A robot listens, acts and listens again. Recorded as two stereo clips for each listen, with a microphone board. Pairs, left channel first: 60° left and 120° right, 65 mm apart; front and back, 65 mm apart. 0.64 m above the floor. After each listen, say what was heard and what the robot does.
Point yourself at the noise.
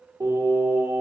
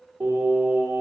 The singing: 130° right. Turn 130° right.
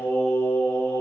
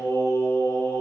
The singing is now 20° left. Turn 20° left.
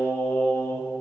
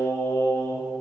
The singing is now 25° left. Turn 25° left.
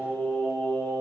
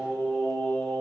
The singing is now 55° left. Turn 55° left.
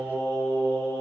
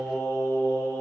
The singing is now 20° left. Turn 20° left.
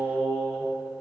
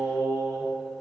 Facing the singing.